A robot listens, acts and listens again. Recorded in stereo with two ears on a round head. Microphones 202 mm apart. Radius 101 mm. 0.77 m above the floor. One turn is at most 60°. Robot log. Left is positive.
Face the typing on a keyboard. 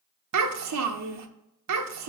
cmd idle
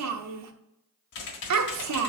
note: The typing on a keyboard: about 50° left or 130° left.
cmd yaw +50
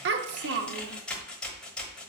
end: Found it: typing on a keyboard, straight ahead.